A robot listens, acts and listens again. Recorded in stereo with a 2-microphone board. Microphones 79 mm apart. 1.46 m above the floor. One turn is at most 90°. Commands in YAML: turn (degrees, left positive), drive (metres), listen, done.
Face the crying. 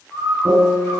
listen: true
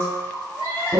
turn: 90
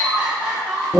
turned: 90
turn: -10
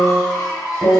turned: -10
done: "Found it: crying, straight ahead."